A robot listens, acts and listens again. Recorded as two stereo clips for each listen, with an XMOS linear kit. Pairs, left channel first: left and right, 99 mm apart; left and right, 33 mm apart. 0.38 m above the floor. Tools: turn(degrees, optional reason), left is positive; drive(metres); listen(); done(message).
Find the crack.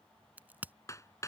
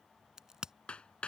turn(degrees=-20, reason="The crack: about 20° right or 160° right.")
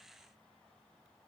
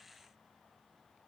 listen()
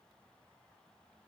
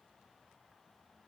done("I heard a crack, but can't make it out now. It was about straight ahead or 140° right.")